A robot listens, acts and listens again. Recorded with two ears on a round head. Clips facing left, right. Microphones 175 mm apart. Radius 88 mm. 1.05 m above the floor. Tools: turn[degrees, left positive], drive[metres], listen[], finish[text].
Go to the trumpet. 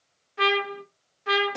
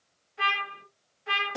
Thought: The trumpet: about 70° left or 110° left.
Action: turn[70]
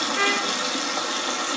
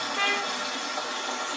Thought: So it is at 30° left.
Action: turn[30]
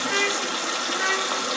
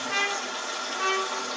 Thought: The trumpet is now 20° left.
Action: turn[20]
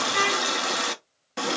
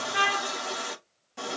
Action: drive[1.0]
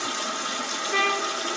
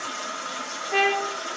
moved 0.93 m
Action: drive[1.0]
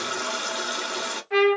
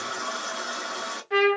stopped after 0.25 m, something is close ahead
Thought: The trumpet is now 10° right.
Action: turn[-10]
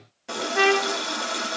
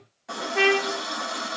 Action: finish[I am next to the trumpet.]